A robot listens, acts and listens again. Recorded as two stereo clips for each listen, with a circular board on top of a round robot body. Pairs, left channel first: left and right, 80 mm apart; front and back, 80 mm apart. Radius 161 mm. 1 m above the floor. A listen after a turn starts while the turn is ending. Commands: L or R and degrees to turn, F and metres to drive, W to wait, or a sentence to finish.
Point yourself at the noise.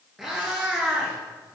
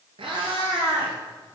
R165
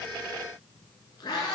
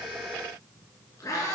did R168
L60
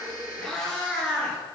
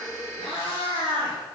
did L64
L10
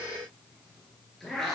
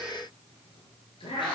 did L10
Facing the cat meowing, 2 to 4 m away.